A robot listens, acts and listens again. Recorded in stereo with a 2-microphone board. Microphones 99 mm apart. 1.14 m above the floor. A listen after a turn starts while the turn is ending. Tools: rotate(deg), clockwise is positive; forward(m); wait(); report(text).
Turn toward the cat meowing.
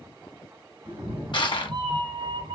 rotate(65)
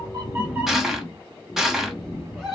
report("Facing the cat meowing, 1 to 2 m away.")